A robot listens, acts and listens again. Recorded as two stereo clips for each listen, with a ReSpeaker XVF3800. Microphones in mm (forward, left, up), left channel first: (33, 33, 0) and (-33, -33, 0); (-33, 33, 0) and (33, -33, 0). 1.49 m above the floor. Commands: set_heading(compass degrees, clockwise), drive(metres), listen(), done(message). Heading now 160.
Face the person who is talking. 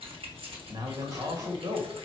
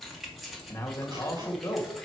set_heading(325)
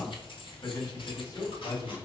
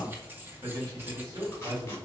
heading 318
done("Found it: a man speaking, straight ahead, 2 to 4 m away.")